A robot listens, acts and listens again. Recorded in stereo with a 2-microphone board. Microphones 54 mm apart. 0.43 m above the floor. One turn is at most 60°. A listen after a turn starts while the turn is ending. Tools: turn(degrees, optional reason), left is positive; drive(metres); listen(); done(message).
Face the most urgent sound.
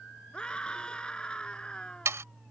turn(degrees=15, reason="The scream: about 15° left or 165° left.")
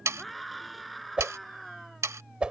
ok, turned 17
done("Facing the scream.")